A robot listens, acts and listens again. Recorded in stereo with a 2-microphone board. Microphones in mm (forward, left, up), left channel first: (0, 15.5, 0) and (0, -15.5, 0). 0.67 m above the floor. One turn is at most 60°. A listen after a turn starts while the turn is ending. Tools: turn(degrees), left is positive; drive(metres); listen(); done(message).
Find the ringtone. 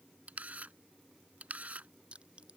listen()
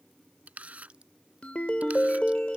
turn(degrees=40)
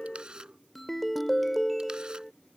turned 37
done("Found it: a ringtone, straight ahead.")